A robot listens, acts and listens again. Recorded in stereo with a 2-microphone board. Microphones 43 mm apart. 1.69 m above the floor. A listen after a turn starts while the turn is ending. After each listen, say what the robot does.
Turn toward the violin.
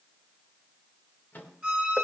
Turn 25° right.
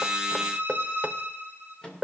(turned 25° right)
Turn 130° right.
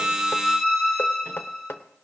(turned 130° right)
Turn 20° right.
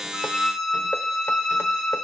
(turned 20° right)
Facing the violin, 2 to 4 m away.